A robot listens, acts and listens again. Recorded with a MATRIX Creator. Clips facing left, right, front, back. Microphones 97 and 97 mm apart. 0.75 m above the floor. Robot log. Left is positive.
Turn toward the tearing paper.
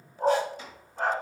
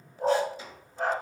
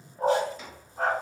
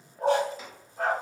cmd idle
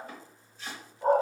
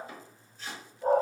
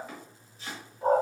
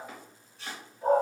cmd idle
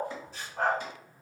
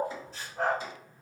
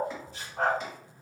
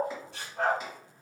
end: I can't make out tearing paper, only a dog barking and chopping.